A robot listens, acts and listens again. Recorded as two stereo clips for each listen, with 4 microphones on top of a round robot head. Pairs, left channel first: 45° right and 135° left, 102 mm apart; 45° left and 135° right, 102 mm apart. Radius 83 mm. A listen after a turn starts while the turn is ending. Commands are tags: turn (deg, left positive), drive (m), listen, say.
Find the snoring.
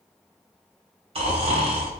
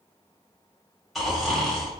<turn deg="135"/>
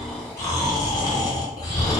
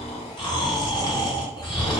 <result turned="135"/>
<say>Facing the snoring, 1 to 2 m away.</say>